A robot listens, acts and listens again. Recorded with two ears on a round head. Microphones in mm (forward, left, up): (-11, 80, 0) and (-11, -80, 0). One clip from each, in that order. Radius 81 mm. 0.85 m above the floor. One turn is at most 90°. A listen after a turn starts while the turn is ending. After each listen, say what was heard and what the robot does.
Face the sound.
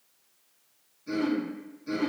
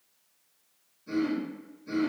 The throat clearing: about 20° left or 160° left. Turn 20° left.
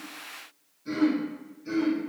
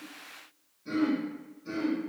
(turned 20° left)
Facing the throat clearing, under 1 m away.